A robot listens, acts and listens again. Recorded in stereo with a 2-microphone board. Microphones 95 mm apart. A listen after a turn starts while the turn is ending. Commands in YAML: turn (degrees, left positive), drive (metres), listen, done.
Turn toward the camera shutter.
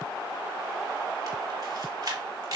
turn: -50
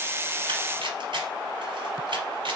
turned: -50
turn: -80
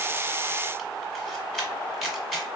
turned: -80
done: "Facing the camera shutter."